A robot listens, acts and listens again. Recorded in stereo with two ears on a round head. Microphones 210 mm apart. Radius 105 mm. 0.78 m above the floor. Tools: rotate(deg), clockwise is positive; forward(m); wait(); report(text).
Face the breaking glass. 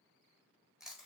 wait()
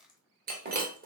rotate(40)
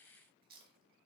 wait()
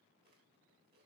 report("I heard breaking glass, but can't make it out now. It was about straight ahead or 100° right.")